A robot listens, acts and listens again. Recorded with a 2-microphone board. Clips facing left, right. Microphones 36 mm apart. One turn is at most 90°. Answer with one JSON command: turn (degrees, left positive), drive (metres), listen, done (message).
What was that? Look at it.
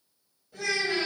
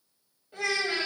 {"turn": -25}
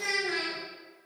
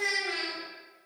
{"turn": -35}
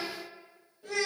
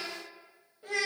{"turn": -35}
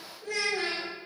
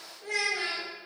{"turn": -90}
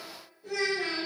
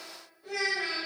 {"turn": -15}
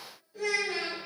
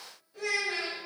{"done": "Facing the child speaking, 1 to 2 m away."}